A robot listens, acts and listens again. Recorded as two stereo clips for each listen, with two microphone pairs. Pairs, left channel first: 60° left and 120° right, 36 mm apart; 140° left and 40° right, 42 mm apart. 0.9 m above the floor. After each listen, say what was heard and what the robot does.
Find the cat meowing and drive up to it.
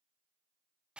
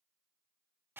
Keep listening.
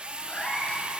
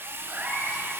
Drive 1.0 m forward.
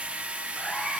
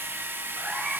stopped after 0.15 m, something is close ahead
Something is in my way. I am facing the cat meowing but have not reached it.